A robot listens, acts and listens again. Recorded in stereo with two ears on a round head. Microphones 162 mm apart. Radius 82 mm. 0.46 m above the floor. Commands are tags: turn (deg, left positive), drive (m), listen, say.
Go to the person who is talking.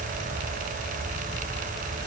<listen/>
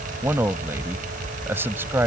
<turn deg="-30"/>
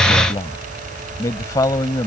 <turn deg="20"/>
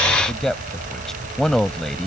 <drive m="1.0"/>
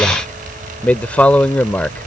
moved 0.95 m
<turn deg="10"/>
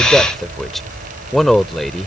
<drive m="1.0"/>
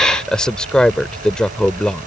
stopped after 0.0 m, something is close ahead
<say>I am next to the man speaking.</say>